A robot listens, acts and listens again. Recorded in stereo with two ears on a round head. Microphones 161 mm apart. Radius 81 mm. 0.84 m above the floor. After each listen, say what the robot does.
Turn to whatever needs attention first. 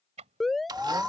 Turn 30° left.
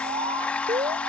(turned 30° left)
Turn 30° right.
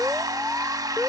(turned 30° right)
Found it: an alarm, straight ahead.